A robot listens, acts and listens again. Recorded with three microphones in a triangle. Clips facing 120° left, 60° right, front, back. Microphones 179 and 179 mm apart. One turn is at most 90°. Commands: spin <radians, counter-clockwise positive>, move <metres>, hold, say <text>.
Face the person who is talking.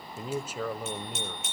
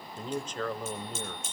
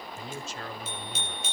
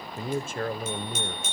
spin -1.57
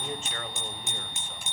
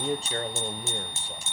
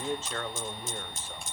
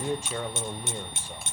spin -1.57
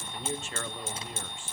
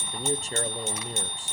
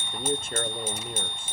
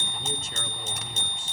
spin -0.26
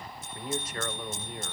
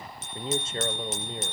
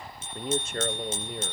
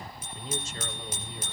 say Facing the man speaking.